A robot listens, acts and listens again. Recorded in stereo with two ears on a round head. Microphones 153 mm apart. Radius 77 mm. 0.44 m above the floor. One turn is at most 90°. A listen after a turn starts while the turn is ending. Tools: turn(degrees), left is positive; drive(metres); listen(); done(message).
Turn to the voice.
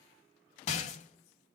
listen()
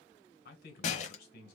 turn(degrees=60)
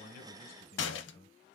turn(degrees=40)
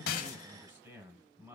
turn(degrees=-15)
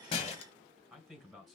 done("Found it: a man speaking, straight ahead.")